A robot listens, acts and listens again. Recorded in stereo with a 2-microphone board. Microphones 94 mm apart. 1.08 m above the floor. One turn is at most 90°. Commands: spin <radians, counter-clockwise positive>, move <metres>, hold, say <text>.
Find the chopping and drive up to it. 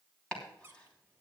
spin 0.52
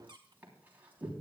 spin -0.35
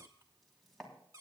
move 1.0
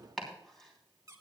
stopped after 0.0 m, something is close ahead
say Something is in my way. I am facing the chopping but have not reached it.